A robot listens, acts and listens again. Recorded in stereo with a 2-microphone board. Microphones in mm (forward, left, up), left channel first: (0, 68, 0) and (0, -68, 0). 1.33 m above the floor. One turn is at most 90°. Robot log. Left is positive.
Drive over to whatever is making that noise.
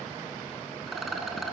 cmd yaw +30
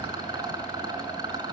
note: So it is at 30° right.
cmd yaw -30
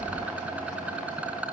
note: The rattle is now 10° right.
cmd yaw -10
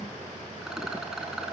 cmd fwd 1.0
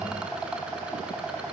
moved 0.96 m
note: The rattle is now 10° right.
cmd yaw -10
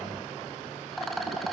cmd fwd 1.0
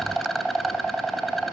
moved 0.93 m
cmd fwd 1.0
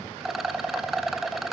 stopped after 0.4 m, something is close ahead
end: I am next to the rattle.